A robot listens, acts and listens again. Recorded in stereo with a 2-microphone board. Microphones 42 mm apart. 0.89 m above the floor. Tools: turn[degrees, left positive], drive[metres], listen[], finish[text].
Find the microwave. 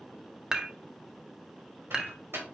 Action: turn[-90]
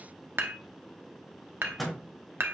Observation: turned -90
Action: finish[Found it: a microwave, straight ahead, 2 to 4 m away.]